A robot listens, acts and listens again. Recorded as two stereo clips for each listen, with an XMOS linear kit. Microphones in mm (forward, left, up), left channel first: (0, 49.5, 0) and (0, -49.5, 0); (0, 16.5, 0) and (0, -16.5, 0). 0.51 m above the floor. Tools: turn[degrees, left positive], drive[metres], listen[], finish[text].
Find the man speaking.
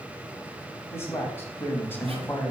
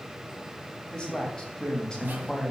Thought: The man speaking: about 20° left or 160° left.
Action: turn[20]
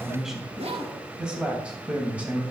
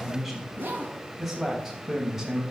Thought: So it is at 15° right.
Action: turn[-15]
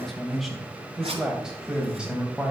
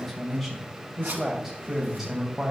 Thought: The man speaking is now 10° right.
Action: turn[-10]
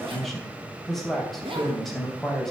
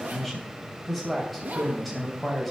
Action: finish[Found it: a man speaking, straight ahead, 2 to 4 m away.]